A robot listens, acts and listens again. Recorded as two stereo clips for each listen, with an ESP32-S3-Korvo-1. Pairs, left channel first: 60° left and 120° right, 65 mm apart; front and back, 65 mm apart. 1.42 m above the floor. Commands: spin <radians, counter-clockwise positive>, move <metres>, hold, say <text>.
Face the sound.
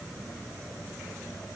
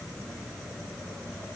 hold
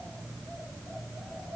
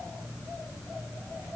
hold
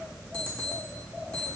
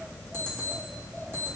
spin 2.27
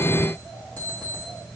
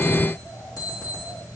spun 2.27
say Facing the alarm clock, 1 to 2 m away.